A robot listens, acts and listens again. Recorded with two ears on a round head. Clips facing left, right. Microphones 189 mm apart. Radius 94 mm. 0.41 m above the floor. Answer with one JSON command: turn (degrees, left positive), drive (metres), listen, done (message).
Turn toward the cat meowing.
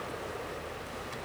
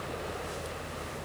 {"listen": true}
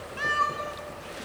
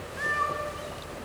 {"turn": 55}
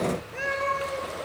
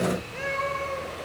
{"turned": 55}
{"turn": 10}
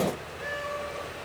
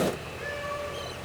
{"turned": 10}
{"listen": true}
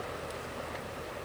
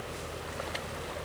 {"listen": true}
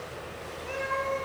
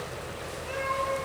{"turn": 10}
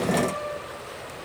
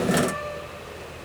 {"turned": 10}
{"listen": true}
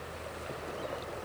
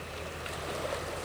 {"listen": true}
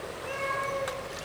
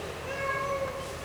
{"done": "Facing the cat meowing."}